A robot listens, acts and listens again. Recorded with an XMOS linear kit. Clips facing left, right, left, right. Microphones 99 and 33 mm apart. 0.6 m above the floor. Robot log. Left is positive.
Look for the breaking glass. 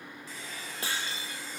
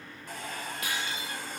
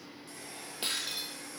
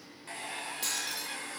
note: The breaking glass: about 30° left or 150° left.
cmd yaw +30
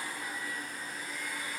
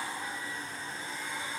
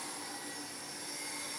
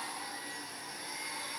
cmd idle
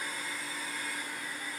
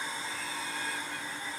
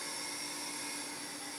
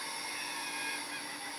end: I heard breaking glass, but can't make it out now. It was about straight ahead or 120° left.